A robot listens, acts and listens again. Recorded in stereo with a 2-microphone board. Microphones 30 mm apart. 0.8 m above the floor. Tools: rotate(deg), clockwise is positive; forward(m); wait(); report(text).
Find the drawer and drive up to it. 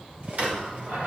rotate(60)
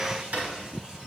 rotate(60)
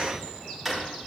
forward(1.0)
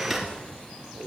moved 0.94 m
wait()
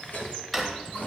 forward(1.0)
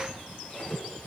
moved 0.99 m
wait()
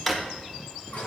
rotate(-15)
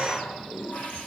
wait()
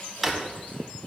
forward(1.0)
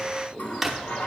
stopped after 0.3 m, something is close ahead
report("Arrived at the drawer, straight ahead.")